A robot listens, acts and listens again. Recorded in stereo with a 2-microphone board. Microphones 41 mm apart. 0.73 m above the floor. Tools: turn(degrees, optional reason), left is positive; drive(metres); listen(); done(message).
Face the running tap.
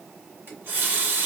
turn(degrees=-60, reason="The running tap: about 60° right or 120° right.")
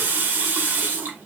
turn(degrees=-60, reason="So it is at 60° right.")
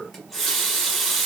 done("Facing the running tap, 1 to 2 m away.")